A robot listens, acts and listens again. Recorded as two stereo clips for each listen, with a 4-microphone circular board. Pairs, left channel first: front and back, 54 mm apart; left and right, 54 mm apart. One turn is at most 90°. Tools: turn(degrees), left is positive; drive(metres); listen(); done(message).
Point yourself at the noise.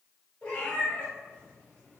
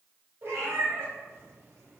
turn(degrees=-60)
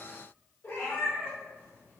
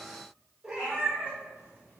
turn(degrees=-35)
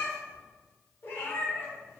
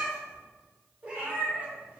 turn(degrees=-35)
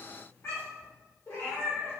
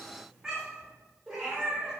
turn(degrees=-20)
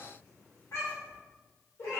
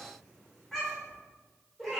done("Found it: a cat meowing, straight ahead.")